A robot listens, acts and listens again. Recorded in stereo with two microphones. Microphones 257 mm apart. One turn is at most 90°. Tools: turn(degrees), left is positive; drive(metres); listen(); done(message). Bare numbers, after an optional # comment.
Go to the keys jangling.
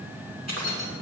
turn(90)
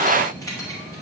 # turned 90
# So it is at 15° left.
turn(15)
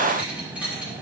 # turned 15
drive(1.0)
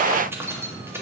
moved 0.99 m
# The keys jangling is now 10° right.
turn(-10)
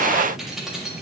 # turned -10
drive(1.0)
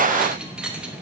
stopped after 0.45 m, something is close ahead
done("Arrived at the keys jangling, straight ahead.")